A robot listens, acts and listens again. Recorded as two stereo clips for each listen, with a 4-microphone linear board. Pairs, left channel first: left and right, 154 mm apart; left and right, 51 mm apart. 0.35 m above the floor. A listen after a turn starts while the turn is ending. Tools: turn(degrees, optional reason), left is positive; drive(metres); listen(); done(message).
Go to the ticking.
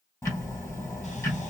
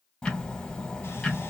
turn(degrees=20, reason="The ticking: about 20° left or 160° left.")
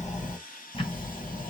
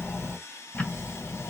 turn(degrees=140, reason="So it is at 140° left.")
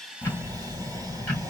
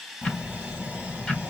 turn(degrees=10, reason="The ticking is now 10° left.")
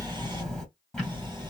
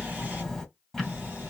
drive(metres=1.0)
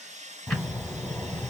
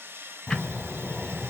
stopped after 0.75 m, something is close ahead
done("Arrived at the ticking, straight ahead.")